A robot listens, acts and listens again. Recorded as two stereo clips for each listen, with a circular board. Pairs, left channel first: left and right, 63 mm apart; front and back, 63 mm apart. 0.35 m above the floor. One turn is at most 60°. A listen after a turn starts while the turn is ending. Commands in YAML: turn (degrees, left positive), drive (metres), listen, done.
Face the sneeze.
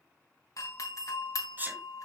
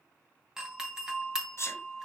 turn: -35
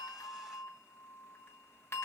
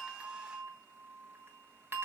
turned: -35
done: "I heard a sneeze from this way, but can't make it out now."